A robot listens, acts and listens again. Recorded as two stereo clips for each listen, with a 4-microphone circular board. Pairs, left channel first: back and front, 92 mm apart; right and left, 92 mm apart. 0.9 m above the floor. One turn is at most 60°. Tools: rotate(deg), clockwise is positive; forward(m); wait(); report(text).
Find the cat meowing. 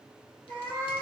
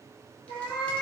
rotate(60)
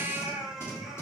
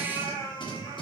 rotate(60)
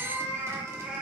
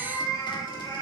rotate(60)
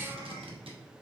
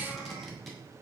rotate(15)
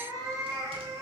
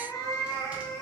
rotate(50)
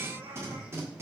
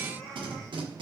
report("Found it: a cat meowing, straight ahead.")